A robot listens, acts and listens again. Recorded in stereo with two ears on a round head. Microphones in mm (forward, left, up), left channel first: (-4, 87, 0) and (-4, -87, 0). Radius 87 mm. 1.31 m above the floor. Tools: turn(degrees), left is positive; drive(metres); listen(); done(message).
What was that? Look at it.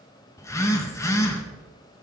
turn(degrees=15)
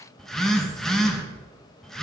done("Found it: a phone buzzing, straight ahead.")